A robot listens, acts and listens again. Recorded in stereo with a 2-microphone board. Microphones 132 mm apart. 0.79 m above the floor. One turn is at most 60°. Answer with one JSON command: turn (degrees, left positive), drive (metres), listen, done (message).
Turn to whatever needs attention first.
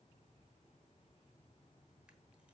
{"listen": true}
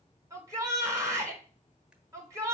{"turn": -25}
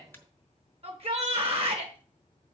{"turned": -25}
{"turn": -60}
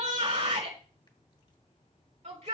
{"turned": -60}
{"turn": -60}
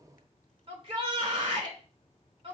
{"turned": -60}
{"turn": -45}
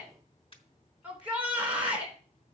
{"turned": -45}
{"turn": -10}
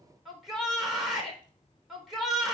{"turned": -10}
{"done": "Found it: a shout, straight ahead."}